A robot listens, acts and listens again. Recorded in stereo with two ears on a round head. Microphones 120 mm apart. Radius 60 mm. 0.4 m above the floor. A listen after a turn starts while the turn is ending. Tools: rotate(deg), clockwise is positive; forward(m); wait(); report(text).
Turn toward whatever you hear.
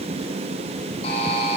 rotate(-45)
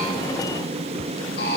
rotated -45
rotate(-90)
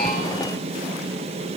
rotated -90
wait()
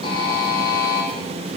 rotate(-35)
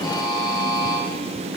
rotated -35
rotate(-30)
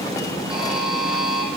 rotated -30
report("Facing the buzzer.")